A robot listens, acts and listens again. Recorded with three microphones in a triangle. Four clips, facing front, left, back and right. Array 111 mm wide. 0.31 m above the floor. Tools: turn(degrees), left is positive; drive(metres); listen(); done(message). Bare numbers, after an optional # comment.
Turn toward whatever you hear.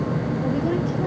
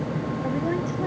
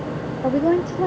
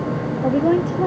# The woman speaking: 135° right.
turn(-135)
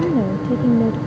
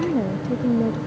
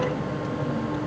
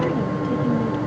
# The woman speaking is now 20° left.
turn(20)
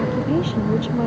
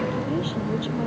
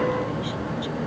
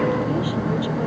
listen()
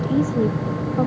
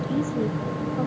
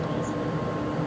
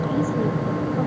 listen()
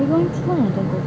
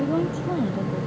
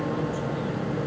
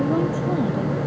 done("Facing the woman speaking.")